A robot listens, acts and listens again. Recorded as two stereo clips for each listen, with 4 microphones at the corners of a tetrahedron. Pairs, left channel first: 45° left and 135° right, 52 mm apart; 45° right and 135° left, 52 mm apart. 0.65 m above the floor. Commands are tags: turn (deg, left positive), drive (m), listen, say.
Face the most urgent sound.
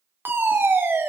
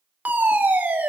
<turn deg="-170"/>
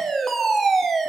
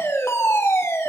<turn deg="-40"/>
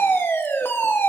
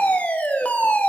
<turn deg="10"/>
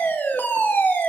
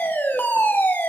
<say>Facing the fire alarm.</say>